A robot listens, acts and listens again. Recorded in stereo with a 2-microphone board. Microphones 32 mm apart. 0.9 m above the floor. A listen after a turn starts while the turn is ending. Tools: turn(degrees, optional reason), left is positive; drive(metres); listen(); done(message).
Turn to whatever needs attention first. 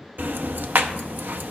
listen()
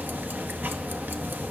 listen()
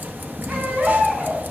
turn(degrees=-65, reason="The baby crying: about 65° right or 115° right.")
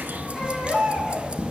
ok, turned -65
done("Facing the baby crying, over 4 m away.")